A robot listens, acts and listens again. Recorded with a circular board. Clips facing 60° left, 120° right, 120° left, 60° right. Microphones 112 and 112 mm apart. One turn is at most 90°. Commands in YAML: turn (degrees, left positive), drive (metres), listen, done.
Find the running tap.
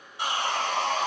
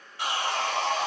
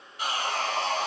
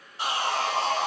listen: true
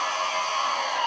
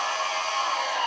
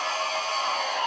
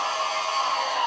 listen: true
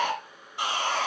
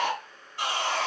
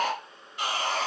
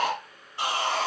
done: "I can't make out a running tap to turn to."